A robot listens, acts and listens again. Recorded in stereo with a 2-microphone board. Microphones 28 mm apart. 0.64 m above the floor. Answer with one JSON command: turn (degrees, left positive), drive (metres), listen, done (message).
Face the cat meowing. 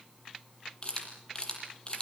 {"listen": true}
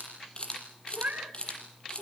{"turn": -90}
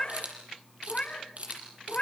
{"turn": 45}
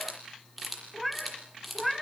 {"done": "Facing the cat meowing."}